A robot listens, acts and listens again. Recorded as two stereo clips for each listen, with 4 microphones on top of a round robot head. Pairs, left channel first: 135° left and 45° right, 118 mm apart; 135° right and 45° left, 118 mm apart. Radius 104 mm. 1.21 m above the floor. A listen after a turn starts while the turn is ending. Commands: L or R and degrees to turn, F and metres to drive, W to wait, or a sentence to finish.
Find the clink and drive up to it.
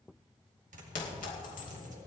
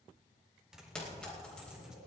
L145
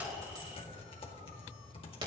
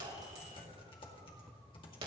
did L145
F1.0
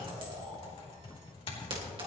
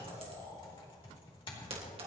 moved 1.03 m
F1.0
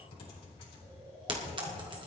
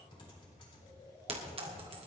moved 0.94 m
F1.0
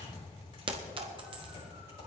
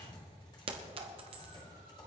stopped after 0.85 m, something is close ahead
Arrived at the clink, straight ahead.